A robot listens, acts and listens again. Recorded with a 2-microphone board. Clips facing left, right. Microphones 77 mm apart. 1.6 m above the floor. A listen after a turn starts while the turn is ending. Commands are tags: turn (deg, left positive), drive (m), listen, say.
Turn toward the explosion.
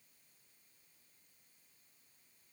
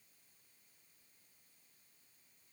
<listen/>
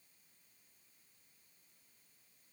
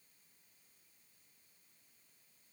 <listen/>
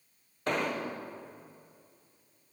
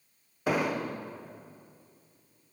<turn deg="-30"/>
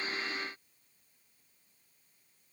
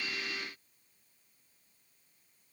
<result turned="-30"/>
<listen/>
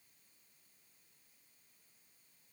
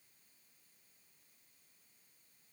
<say>I heard an explosion, but can't make it out now. It was about 20° left or 140° right.</say>